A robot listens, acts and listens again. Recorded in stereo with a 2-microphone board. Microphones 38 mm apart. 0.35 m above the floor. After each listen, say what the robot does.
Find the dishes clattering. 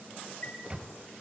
Keep listening.
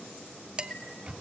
Turn 20° right.
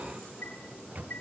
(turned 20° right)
Keep listening.
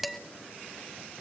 Found it: dishes clattering, straight ahead, 1 to 2 m away.